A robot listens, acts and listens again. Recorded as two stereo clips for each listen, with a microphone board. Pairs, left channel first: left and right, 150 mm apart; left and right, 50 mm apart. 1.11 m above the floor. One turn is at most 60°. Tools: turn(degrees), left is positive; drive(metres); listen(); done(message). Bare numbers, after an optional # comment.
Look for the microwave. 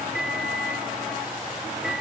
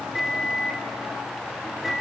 turn(-30)
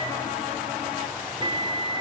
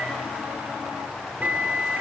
# So it is at 145° right.
turn(-60)
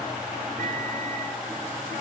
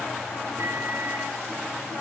# The microwave is now 60° right.
turn(-60)
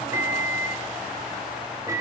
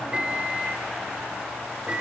# The microwave is now 20° right.
turn(-20)
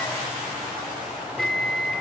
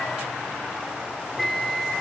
done("Facing the microwave, 2 to 4 m away.")